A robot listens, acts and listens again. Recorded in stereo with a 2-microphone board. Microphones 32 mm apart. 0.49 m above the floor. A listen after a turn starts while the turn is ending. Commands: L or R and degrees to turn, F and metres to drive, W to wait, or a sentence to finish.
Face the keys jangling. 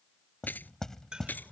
L90
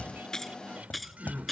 Found it: keys jangling, straight ahead.